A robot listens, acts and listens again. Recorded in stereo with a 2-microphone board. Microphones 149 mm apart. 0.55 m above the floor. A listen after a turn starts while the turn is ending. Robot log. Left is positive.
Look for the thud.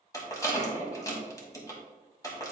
cmd idle
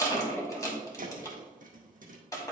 note: The thud: about 65° right or 115° right.
cmd yaw -65
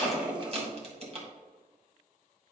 cmd idle
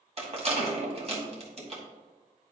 end: I heard a thud, but can't make it out now. It was about straight ahead or 50° right.